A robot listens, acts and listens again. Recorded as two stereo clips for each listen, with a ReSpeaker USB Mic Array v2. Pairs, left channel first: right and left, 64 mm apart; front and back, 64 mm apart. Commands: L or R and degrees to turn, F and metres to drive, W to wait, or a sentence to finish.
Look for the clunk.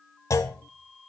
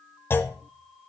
R50
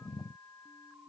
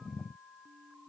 I heard a clunk from this way, but can't make it out now.